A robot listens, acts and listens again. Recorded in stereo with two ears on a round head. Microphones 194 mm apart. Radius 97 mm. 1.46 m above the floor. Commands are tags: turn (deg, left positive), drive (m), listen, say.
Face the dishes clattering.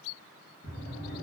<listen/>
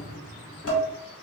<turn deg="65"/>
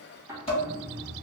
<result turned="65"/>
<turn deg="30"/>
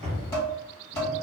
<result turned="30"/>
<turn deg="15"/>
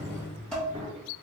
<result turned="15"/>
<say>Found it: dishes clattering, straight ahead, 1 to 2 m away.</say>